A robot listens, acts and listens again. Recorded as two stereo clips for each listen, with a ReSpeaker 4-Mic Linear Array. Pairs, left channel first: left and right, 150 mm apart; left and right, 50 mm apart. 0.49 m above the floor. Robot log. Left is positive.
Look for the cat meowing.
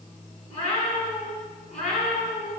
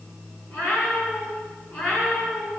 note: The cat meowing: about 50° left or 130° left.
cmd yaw +50
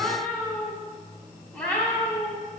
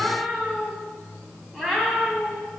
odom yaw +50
note: So it is at 10° left.
cmd yaw +10
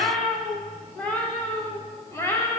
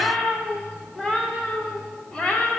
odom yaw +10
note: The cat meowing is now 15° left.
cmd yaw +15
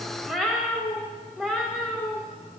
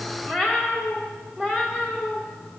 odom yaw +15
end: Facing the cat meowing.